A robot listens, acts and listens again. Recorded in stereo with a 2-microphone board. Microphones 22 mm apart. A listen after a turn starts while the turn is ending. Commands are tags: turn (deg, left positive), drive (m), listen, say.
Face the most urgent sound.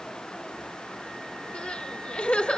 <turn deg="65"/>
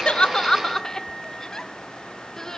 <turn deg="15"/>
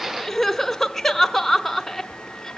<say>Found it: crying, straight ahead.</say>